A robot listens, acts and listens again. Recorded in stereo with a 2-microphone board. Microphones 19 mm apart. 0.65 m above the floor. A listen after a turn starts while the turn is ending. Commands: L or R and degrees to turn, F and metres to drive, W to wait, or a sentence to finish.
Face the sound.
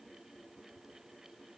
W
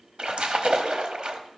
R50
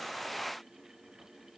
W
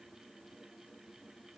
I heard a splash, but can't make it out now. It was about straight ahead or 80° right.